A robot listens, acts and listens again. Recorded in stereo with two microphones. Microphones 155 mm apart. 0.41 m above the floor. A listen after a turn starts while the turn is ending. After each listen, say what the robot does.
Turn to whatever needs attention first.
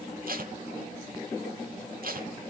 Keep listening.
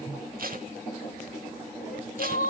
Turn 60° left.
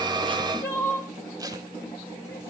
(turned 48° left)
Turn 15° left.
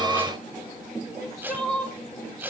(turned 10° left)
Facing the crying.